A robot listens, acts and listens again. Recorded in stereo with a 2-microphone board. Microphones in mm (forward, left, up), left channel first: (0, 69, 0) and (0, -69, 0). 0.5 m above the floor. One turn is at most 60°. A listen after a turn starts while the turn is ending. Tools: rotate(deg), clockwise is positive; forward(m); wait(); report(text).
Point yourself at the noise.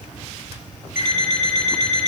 rotate(-60)
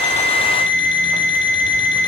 rotate(-35)
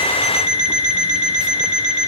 report("Found it: an alarm clock, straight ahead, over 4 m away.")